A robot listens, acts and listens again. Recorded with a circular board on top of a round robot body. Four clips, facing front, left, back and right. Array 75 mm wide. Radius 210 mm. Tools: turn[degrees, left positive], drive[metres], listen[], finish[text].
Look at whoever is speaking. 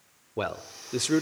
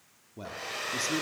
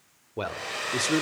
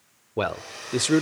Thought: The man speaking: 85° right.
Action: turn[-85]
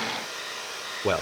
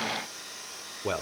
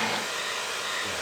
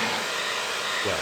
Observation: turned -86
Action: finish[Facing the man speaking, 1 to 2 m away.]